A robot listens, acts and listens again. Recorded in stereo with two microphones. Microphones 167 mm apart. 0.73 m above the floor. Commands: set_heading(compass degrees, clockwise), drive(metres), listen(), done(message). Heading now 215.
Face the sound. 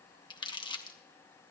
set_heading(185)
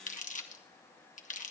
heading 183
set_heading(68)
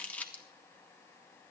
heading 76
set_heading(66)
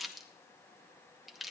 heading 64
done("Facing the crumpling.")